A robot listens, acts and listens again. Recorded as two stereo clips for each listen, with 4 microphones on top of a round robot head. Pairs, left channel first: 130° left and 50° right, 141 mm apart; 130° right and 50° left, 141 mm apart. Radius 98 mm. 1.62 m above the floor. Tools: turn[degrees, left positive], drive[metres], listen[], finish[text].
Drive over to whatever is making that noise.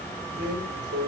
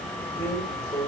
Thought: The drawer: 50° right.
Action: turn[-50]
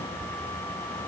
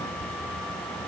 Action: listen[]
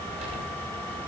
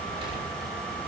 Action: listen[]
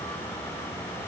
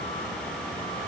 Action: finish[Facing where the drawer came from. I can't hear it now. I did not reach it.]